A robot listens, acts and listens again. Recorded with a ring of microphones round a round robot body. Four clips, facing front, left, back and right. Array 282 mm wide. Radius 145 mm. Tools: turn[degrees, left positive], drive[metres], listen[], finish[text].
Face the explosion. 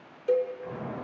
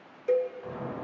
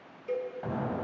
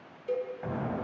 Thought: The explosion: 140° right.
Action: turn[-140]
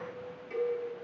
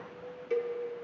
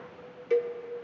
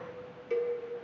Action: finish[I heard an explosion from this way, but can't make it out now.]